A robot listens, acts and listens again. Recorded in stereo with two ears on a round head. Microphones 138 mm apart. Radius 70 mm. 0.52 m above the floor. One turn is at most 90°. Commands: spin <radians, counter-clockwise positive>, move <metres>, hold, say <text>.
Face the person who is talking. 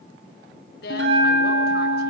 spin 1.57
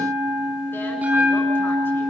hold
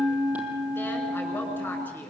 hold
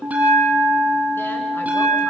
say Facing where the woman speaking came from. I can't hear it now.